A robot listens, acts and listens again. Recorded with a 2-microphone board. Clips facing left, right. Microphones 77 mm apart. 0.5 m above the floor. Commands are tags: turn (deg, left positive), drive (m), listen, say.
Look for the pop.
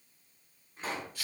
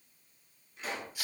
<turn deg="35"/>
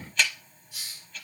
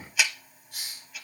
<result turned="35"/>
<listen/>
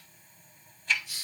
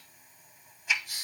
<say>I heard a pop, but can't make it out now. It was about straight ahead or 110° left.</say>